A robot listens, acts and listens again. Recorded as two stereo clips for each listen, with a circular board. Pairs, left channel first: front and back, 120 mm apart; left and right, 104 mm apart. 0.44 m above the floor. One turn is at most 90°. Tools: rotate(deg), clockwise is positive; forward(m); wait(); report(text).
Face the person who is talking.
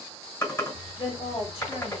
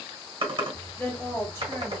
rotate(-25)
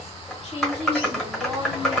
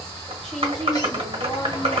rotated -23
wait()
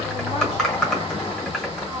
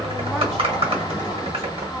wait()
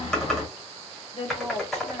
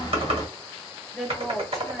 report("Facing the woman speaking.")